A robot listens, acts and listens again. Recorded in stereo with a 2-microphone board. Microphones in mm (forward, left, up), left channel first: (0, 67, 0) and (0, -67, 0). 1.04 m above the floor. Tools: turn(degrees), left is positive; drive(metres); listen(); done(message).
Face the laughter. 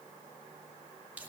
listen()
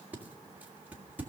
listen()
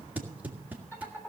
turn(degrees=15)
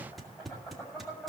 turn(degrees=25)
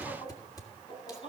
turn(degrees=135)
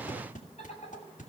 turn(degrees=50)
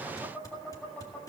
turn(degrees=10)
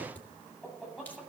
done("Found it: laughter, straight ahead.")